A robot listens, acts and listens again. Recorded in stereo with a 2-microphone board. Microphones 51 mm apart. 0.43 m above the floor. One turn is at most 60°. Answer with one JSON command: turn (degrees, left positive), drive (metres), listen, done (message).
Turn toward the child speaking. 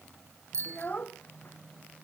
{"turn": 30}
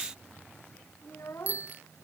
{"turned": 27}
{"turn": 60}
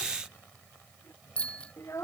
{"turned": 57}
{"turn": 60}
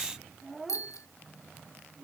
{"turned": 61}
{"done": "Facing the child speaking."}